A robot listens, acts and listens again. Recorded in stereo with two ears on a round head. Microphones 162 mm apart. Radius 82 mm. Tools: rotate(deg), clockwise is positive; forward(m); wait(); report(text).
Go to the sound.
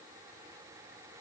wait()
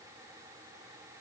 wait()
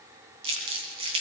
rotate(30)
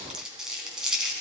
forward(1.0)
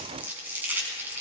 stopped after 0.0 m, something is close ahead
rotate(10)
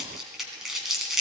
report("Something is in my way. I am facing the crumpling but have not reached it.")